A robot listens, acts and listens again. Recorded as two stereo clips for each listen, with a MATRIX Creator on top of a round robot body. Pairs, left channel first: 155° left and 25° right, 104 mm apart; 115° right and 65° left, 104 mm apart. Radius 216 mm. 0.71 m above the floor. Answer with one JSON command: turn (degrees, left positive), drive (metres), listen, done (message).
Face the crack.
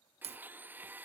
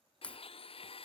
{"turn": -35}
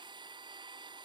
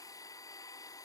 {"done": "Facing where the crack came from. I can't hear it now."}